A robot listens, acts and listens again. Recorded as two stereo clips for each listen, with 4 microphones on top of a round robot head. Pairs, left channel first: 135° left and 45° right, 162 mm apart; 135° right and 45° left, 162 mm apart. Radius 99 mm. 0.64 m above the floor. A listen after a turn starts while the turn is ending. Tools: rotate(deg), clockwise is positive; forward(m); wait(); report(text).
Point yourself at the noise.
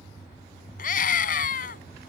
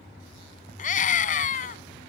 rotate(-180)
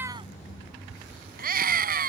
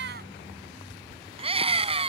rotate(10)
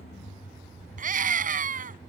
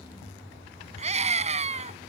report("Found it: a scream, straight ahead.")